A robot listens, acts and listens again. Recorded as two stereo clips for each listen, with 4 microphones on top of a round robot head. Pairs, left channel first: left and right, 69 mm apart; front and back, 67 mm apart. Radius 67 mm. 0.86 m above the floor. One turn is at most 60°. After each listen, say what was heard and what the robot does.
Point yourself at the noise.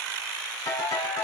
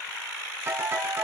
The ringtone: 125° left. Turn 60° left.
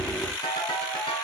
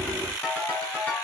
The ringtone is now 60° left. Turn 60° left.
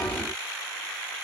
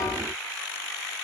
Keep listening.
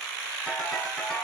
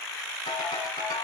The ringtone is now 10° left. Turn 10° left.
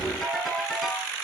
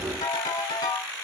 Found it: a ringtone, straight ahead.